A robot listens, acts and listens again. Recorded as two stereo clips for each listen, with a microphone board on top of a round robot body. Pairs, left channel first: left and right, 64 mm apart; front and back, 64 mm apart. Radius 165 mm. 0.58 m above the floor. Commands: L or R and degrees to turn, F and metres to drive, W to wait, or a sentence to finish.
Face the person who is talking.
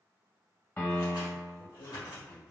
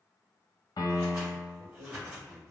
L160
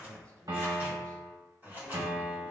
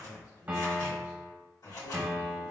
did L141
L20
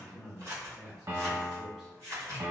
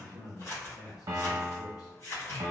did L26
Facing the man speaking, 1 to 2 m away.